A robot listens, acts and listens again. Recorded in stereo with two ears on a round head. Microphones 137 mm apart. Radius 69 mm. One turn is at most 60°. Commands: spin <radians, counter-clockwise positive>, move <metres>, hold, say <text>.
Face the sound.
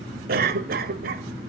spin -1.05
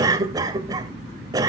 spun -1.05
spin -0.44
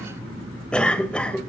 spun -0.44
spin 0.17
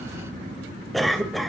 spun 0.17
say Found it: a cough, straight ahead, 1 to 2 m away.